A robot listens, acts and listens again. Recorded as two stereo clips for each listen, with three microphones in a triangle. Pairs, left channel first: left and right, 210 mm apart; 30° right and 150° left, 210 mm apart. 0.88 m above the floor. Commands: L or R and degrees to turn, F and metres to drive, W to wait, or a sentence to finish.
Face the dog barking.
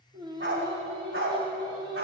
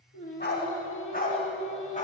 R80
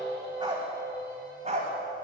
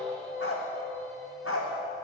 R35
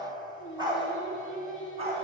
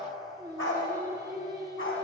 R30
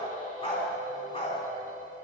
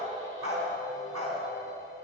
L25
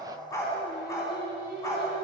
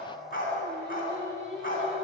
L15
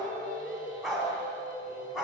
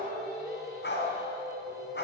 Found it: a dog barking, straight ahead.